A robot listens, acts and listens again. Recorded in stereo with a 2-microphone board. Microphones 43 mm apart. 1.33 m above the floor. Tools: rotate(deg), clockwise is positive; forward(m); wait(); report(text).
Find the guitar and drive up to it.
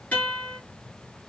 rotate(-30)
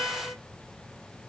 rotate(-120)
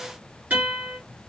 rotate(30)
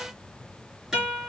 forward(1.0)
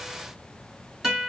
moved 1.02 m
forward(1.0)
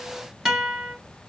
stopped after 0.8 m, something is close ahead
report("I am next to the guitar.")